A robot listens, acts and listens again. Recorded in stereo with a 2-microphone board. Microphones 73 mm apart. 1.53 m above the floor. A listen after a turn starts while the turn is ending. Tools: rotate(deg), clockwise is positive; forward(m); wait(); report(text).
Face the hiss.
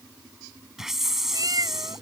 rotate(30)
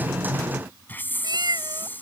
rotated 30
rotate(-25)
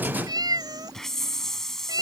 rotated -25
report("Found it: a hiss, straight ahead.")